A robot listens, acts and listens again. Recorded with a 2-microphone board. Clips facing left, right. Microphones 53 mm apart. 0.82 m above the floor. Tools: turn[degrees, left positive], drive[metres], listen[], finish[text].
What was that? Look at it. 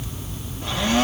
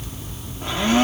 Thought: The blender: about 30° right or 150° right.
Action: turn[-30]
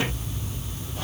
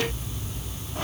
Action: listen[]
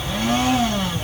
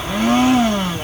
Thought: So it is at 120° right.
Action: turn[-120]
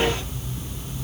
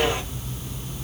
Action: listen[]
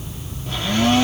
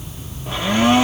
Thought: The blender is now 20° right.
Action: turn[-20]
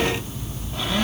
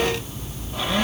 Action: listen[]
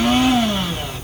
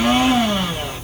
Action: finish[Found it: a blender, straight ahead.]